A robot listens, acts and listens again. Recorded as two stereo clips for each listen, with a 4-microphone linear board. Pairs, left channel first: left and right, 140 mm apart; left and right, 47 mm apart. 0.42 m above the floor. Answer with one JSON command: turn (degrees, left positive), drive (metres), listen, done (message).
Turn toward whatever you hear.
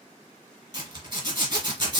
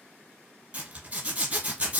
{"turn": -30}
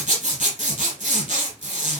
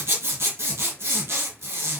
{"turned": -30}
{"turn": -115}
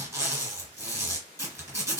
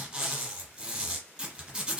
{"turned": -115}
{"turn": -20}
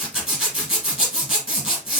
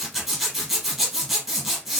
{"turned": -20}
{"done": "Facing the zipper."}